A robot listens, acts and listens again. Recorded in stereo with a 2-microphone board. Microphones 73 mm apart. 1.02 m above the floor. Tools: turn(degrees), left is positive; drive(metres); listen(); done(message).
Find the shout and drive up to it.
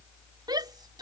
turn(degrees=-75)
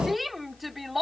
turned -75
drive(metres=1.0)
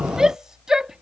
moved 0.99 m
turn(degrees=-10)
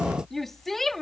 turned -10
drive(metres=1.0)
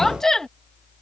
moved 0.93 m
drive(metres=1.0)
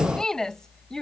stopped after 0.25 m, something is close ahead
turn(degrees=10)
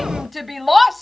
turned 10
done("I am next to the shout.")